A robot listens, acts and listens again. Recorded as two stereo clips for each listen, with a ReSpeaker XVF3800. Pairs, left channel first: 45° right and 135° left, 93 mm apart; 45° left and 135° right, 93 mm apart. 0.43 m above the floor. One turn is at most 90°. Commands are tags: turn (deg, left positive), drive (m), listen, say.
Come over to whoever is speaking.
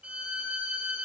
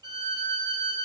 <listen/>
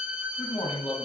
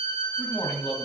<turn deg="-40"/>
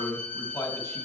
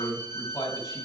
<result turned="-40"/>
<drive m="1.0"/>
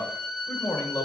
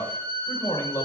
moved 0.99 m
<drive m="1.0"/>
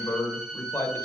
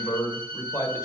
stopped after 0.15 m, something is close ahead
<say>Arrived at the man speaking, straight ahead.</say>